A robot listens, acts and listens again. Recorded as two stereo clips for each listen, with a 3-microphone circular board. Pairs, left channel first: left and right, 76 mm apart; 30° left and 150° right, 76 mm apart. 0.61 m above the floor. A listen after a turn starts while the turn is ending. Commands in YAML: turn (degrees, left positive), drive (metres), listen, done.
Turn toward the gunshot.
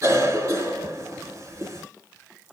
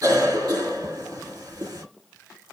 listen: true
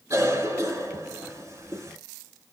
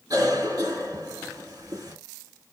listen: true
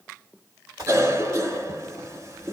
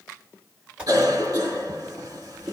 turn: -75
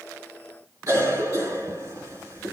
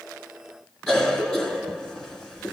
done: "Facing where the gunshot came from. I can't hear it now."